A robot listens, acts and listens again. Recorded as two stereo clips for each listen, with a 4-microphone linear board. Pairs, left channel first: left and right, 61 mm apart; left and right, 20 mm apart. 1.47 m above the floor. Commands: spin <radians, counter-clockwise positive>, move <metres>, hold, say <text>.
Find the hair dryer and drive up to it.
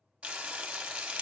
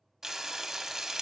hold
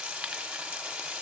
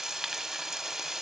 hold
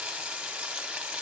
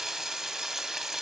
say I can't make out a hair dryer to turn to.